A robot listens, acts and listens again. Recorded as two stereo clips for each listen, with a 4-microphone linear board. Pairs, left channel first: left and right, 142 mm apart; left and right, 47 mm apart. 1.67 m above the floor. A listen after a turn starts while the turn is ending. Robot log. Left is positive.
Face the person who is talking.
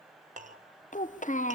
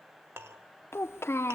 note: The child speaking: about 65° left or 115° left.
cmd yaw +65
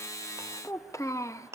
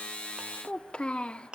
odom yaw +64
note: So it is at 25° left.
cmd yaw +25
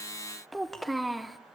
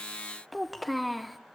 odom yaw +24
end: Found it: a child speaking, straight ahead, under 1 m away.